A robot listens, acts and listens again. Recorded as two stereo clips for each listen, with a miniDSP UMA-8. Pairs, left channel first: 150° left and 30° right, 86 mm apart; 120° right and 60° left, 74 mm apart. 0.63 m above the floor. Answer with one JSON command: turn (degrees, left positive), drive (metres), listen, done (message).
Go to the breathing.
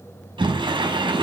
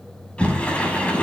{"listen": true}
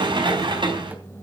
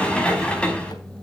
{"listen": true}
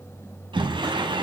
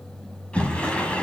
{"done": "I can't make out breathing to turn to."}